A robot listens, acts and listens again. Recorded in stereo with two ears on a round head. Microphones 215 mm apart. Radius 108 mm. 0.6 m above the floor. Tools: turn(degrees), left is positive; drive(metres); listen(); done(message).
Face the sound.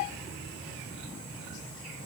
listen()
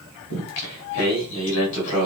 turn(degrees=70)
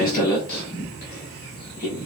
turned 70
turn(degrees=35)
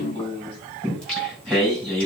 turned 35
done("Facing the singing, over 4 m away.")